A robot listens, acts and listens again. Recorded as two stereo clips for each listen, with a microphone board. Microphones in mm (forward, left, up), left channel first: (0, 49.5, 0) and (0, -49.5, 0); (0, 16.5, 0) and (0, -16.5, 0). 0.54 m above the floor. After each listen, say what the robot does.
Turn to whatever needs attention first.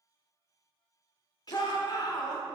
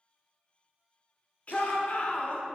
Turn 45° left.
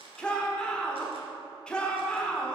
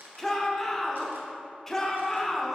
Turn 10° left.
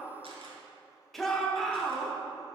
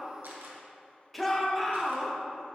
Found it: a shout, straight ahead, 1 to 2 m away.